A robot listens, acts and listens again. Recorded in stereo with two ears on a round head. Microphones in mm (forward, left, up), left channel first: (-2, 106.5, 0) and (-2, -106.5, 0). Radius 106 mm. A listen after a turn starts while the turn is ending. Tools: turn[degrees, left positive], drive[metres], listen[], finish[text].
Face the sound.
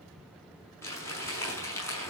Action: turn[30]
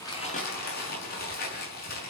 Thought: So it is at 140° left.
Action: turn[140]
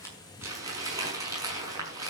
Thought: The crumpling is now 15° right.
Action: turn[-15]
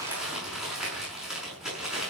Action: finish[Facing the crumpling, over 4 m away.]